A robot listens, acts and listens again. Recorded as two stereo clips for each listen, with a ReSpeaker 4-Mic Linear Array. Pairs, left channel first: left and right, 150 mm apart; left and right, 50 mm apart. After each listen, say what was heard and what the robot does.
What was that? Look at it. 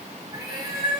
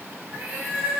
The cat meowing: about 30° right or 150° right. Turn 30° right.
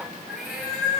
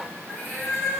Facing the cat meowing, over 4 m away.